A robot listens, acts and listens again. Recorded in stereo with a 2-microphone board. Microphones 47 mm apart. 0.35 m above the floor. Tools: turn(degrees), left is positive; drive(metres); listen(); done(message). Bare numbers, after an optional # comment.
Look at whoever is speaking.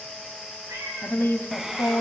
# The woman speaking: about 60° left or 120° left.
turn(60)
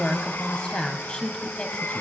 # So it is at 25° left.
turn(25)
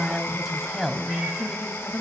done("Facing the woman speaking, 2 to 4 m away.")